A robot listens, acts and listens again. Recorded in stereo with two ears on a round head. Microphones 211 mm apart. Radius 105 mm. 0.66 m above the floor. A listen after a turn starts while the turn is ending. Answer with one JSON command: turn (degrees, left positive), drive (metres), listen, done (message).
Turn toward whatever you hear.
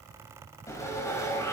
{"turn": 30}
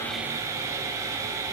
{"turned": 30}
{"turn": -15}
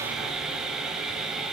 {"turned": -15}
{"done": "Found it: sawing, straight ahead, 2 to 4 m away."}